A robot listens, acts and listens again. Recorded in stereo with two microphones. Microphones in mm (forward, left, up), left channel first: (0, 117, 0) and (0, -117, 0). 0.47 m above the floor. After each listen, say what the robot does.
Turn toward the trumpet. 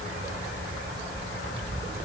Keep listening.
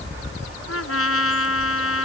Turn 75° left.
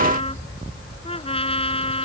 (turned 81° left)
Turn 25° left.
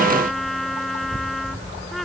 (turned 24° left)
Found it: a trumpet, straight ahead.